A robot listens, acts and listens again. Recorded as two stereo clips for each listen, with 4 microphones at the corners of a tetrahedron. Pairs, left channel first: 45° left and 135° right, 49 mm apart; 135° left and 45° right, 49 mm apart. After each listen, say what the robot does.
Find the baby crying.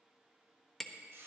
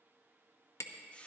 Keep listening.
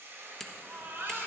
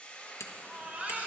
Turn 105° right.
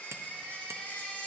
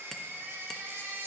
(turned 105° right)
Turn 15° right.
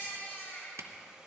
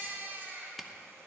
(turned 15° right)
Facing the baby crying.